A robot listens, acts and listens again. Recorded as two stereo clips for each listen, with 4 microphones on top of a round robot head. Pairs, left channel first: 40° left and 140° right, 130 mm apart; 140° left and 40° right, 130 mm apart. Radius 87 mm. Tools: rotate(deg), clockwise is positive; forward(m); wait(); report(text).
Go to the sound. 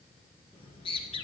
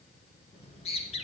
rotate(-90)
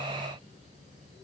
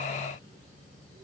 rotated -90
forward(1.0)
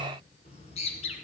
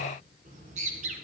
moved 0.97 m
forward(1.0)
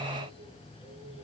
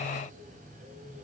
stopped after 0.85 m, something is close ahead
rotate(10)
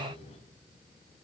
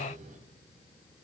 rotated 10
report("I am next to the bird.")